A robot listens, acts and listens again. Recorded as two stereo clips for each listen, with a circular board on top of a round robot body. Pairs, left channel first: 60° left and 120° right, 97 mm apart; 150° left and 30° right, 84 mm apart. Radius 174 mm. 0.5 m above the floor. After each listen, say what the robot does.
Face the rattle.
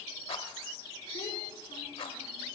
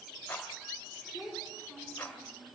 Turn 80° left.
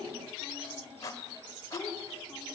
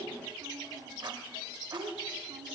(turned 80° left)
Facing the rattle.